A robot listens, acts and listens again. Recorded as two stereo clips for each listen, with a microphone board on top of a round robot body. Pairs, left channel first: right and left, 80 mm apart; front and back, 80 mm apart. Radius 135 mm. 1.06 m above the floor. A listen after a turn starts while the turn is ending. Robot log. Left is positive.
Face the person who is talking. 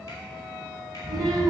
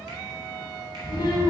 note: The child speaking: 40° left.
cmd yaw +40
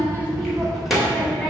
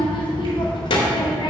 end: Facing the child speaking.